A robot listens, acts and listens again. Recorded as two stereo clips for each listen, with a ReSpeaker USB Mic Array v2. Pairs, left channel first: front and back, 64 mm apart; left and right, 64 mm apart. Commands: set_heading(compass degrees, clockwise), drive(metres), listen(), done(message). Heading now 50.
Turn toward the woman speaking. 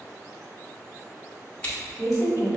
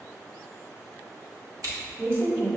set_heading(95)
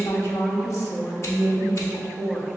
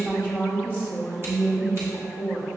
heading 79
set_heading(134)
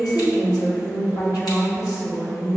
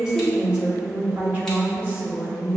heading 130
set_heading(155)
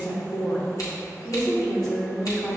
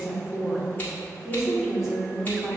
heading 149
set_heading(159)
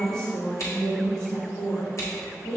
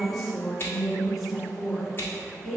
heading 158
done("Facing the woman speaking.")